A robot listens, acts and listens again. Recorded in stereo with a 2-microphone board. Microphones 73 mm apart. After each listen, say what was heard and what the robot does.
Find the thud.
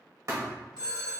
The thud: about 50° right or 130° right. Turn 50° right.
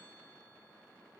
Keep listening.
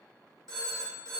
I heard a thud, but can't make it out now. It was about straight ahead or 80° right.